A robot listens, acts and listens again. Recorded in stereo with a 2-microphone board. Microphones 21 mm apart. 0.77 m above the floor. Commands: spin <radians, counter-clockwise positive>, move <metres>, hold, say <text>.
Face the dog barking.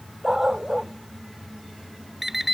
spin -0.26
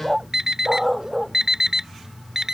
say Facing the dog barking.